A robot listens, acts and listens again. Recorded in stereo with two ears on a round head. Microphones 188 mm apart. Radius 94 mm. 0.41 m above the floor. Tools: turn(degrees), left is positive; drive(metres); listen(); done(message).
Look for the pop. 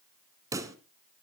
turn(degrees=-15)
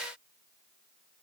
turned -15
listen()
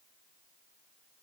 done("I heard a pop, but can't make it out now. It was about straight ahead or 150° right.")